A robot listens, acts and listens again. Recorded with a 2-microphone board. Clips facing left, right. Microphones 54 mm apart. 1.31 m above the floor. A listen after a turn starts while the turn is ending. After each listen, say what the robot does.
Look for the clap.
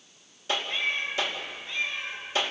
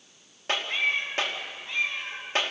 Turn 45° right.
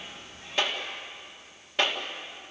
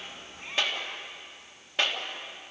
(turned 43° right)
Facing the clap.